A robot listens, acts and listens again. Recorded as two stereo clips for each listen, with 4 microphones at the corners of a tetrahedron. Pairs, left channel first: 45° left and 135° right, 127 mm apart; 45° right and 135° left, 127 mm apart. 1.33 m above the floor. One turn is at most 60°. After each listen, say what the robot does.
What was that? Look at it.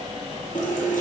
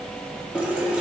Turn 55° left.
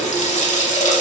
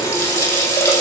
Turn 25° left.
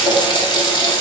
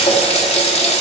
Turn 10° right.
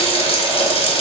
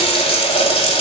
Facing the running tap.